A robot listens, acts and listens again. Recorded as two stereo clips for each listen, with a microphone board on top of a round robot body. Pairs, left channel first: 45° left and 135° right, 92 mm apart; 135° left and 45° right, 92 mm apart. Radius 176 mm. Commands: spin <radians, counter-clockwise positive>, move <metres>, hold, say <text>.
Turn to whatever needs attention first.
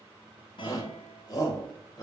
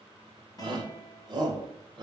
say Found it: a shout, straight ahead.